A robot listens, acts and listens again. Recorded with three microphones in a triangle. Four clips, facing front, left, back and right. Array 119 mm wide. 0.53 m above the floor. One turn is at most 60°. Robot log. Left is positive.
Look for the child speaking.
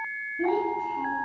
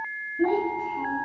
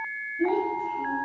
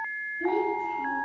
note: The child speaking: 60° left.
cmd yaw +60
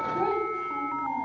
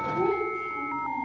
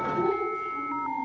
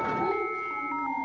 note: The child speaking is now 15° right.
cmd yaw -15
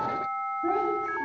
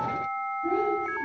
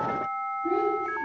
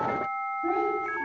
note: The child speaking is now 35° right.
cmd yaw -35
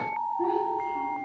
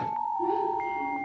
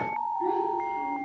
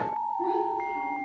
cmd idle
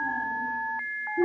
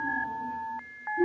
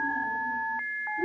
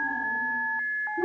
note: The child speaking is now 25° right.
cmd yaw -25
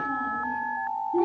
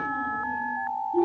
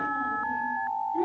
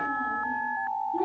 end: Facing the child speaking.